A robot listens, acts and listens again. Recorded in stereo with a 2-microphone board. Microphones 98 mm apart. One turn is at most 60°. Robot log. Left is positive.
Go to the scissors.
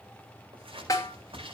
cmd yaw -60
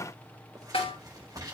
note: So it is at 40° right.
cmd yaw -40
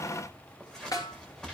cmd fwd 1.0
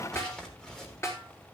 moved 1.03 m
cmd fwd 1.0
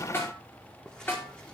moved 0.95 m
cmd idle
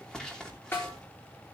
cmd fwd 1.0
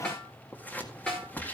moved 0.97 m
note: The scissors is now 20° left.
cmd yaw +20
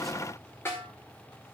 cmd idle
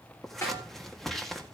cmd fwd 1.0
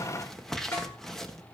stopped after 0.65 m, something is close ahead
end: Arrived at the scissors, straight ahead.